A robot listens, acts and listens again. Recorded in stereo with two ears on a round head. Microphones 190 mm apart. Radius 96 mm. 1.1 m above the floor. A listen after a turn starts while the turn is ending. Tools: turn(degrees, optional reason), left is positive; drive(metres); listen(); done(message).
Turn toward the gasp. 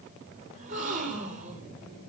turn(degrees=-35, reason="The gasp: about 35° right or 145° right.")
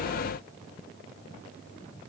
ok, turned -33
listen()
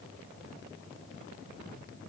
done("I heard a gasp, but can't make it out now. It was about 5° right or 110° right.")